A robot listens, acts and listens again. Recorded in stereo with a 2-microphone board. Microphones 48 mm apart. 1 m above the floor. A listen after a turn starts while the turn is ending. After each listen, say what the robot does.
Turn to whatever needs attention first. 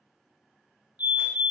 Turn 40° right.
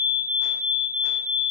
Found it: a fire alarm, straight ahead, 2 to 4 m away.